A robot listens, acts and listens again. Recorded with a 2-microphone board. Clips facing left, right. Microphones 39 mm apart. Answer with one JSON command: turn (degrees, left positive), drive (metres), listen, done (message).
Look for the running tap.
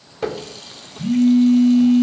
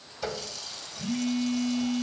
{"turn": 40}
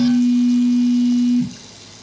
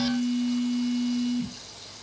{"listen": true}
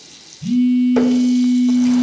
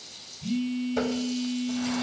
{"turn": 100}
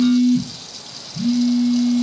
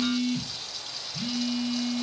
{"listen": true}
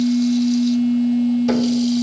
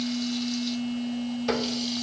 {"listen": true}
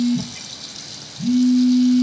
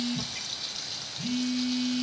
{"turn": -10}
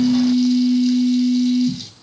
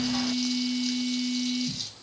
{"listen": true}
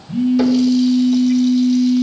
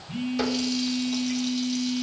{"listen": true}
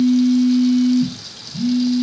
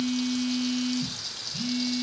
{"done": "I heard a running tap from this way, but can't make it out now."}